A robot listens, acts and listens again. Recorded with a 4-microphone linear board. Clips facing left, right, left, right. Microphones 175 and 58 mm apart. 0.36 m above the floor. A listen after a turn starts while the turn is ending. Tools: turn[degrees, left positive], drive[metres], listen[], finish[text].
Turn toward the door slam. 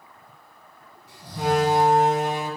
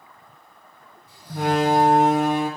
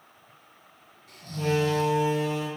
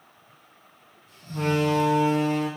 Thought: The door slam: about 60° right or 120° right.
Action: turn[-60]
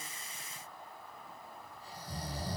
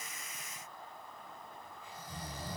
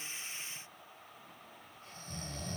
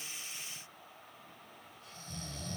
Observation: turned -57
Action: listen[]
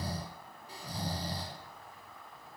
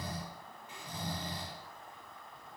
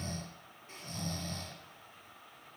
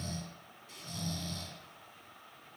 Action: finish[I heard a door slam, but can't make it out now. It was about 5° right or 60° right.]